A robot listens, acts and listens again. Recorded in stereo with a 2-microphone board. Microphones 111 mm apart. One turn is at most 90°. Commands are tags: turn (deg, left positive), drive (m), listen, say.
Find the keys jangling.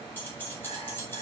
<turn deg="20"/>
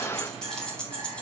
<turn deg="30"/>
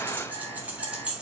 <turn deg="-10"/>
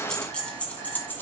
<turn deg="15"/>
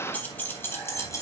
<turn deg="30"/>
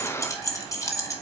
<turn deg="30"/>
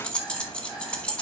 <turn deg="10"/>
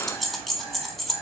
<say>Facing the keys jangling.</say>